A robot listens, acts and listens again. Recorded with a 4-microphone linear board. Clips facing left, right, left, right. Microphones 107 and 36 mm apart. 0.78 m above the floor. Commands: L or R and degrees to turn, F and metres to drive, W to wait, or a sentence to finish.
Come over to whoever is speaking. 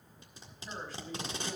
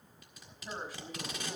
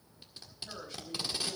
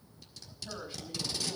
R30
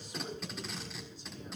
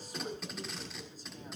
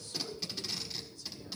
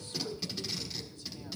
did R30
R140
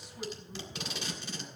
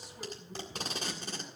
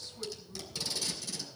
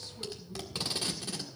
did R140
W
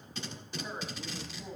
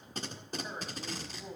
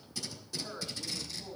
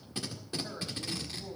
F1.0
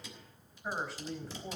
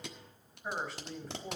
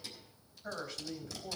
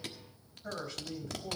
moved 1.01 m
F1.0
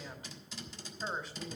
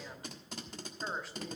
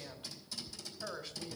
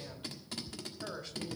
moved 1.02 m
F1.0
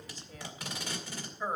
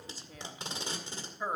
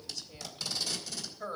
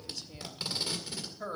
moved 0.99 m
R10
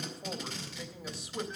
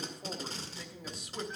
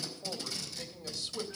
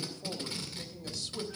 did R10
F1.0
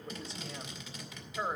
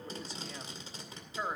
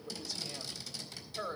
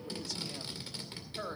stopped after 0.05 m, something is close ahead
Arrived at the woman speaking, straight ahead.